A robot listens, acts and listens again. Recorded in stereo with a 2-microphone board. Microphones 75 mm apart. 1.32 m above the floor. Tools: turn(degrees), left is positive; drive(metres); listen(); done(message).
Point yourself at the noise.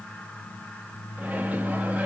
turn(degrees=-20)
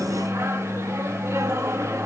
turn(degrees=-140)
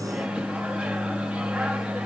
turn(degrees=-15)
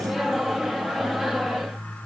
done("Found it: a microwave, straight ahead, 1 to 2 m away.")